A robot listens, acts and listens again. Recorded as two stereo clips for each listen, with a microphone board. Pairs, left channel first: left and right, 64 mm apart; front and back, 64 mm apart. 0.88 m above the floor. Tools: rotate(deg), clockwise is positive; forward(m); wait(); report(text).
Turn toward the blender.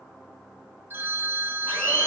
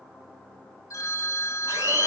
rotate(-160)
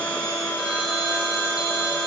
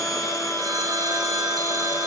rotate(-25)
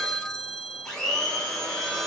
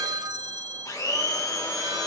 rotate(-10)
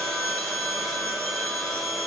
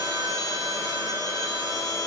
report("Facing the blender.")